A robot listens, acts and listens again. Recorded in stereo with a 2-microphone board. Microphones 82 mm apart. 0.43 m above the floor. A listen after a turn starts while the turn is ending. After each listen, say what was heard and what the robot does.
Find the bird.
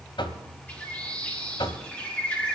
Turn 30° left.
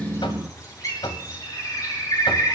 So it is at 135° left. Turn 135° left.
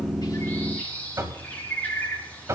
The bird is now 20° left. Turn 20° left.
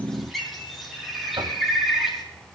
Found it: a bird, straight ahead, over 4 m away.